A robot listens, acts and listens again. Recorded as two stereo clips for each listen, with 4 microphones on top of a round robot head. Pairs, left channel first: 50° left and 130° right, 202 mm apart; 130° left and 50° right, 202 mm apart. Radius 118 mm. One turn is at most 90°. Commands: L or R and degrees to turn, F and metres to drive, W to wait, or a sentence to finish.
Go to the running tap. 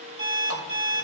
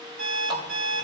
R90
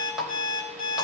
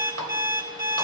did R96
R45
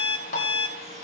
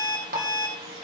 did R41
F1.0
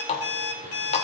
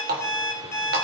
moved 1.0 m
R10
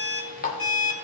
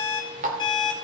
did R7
F1.0
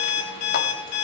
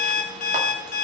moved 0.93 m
W
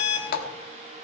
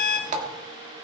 F1.0
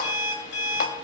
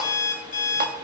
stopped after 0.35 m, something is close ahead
W
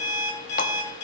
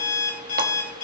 W
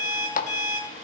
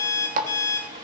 I am next to the running tap.